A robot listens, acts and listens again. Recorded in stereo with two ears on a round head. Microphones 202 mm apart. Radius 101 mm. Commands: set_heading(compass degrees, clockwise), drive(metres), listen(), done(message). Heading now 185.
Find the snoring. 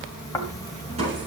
set_heading(155)
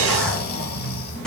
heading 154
set_heading(19)
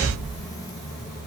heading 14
done("Facing the snoring, 1 to 2 m away.")